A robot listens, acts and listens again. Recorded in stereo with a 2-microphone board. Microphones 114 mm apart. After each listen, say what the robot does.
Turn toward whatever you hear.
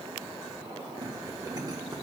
Keep listening.
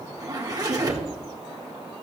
Turn 35° right.
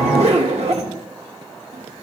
Turn 110° right.
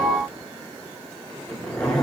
Found it: a zipper, straight ahead, 1 to 2 m away.